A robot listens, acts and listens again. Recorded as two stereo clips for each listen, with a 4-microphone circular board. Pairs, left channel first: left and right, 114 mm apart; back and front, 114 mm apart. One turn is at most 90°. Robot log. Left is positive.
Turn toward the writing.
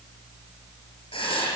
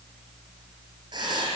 note: The writing: 45° left.
cmd yaw +45
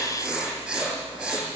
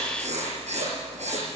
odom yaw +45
note: The writing is now 10° right.
cmd yaw -10
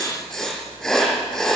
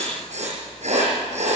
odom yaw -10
end: Found it: writing, straight ahead, over 4 m away.